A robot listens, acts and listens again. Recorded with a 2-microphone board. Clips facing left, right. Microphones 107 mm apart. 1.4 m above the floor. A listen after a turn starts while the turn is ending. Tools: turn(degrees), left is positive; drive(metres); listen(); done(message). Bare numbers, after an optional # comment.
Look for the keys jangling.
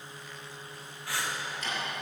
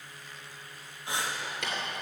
turn(-90)
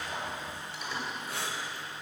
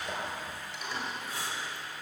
# So it is at 10° left.
turn(10)
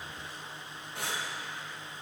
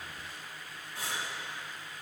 listen()
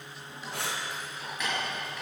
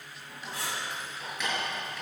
# The keys jangling is now 10° left.
turn(10)
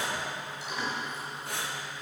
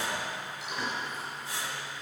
done("Found it: keys jangling, straight ahead, over 4 m away.")